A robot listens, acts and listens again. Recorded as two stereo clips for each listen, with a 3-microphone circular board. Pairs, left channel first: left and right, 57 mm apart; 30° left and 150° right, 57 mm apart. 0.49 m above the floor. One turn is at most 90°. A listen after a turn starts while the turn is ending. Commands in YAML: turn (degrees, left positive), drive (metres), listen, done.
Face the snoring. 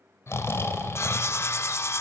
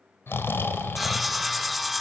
turn: 65
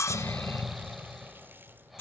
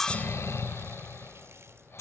done: "Found it: snoring, straight ahead."